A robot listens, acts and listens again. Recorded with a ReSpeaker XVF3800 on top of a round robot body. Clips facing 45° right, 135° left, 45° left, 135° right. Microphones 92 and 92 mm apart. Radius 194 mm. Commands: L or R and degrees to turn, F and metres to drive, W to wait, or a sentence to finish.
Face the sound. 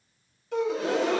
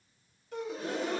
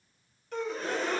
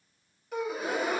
R55
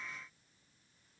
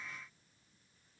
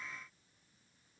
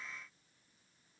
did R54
I heard a gasp from this way, but can't make it out now.